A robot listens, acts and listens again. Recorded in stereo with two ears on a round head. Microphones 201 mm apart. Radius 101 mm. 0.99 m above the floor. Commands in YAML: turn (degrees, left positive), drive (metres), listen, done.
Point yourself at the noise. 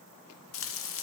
turn: 60
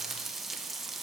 done: "Found it: frying, straight ahead, under 1 m away."